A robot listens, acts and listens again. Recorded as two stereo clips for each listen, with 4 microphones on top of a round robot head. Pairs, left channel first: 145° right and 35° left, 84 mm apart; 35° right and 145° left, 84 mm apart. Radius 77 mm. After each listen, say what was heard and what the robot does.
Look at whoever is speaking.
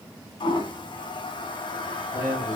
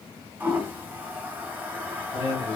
The man speaking: 35° right. Turn 35° right.
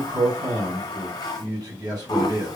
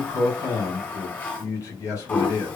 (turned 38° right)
Found it: a man speaking, straight ahead.